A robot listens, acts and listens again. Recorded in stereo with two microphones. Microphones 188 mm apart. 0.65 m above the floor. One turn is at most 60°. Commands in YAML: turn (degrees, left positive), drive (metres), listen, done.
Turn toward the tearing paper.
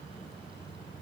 listen: true
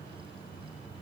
listen: true
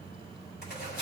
turn: 55
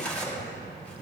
done: "Found it: tearing paper, straight ahead."